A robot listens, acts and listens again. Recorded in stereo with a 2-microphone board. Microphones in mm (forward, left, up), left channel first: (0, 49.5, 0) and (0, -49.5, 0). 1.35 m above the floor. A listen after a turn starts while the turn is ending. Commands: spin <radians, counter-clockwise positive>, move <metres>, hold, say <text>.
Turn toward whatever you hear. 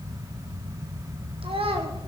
spin -1.31
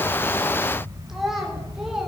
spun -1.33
say Found it: a child speaking, straight ahead.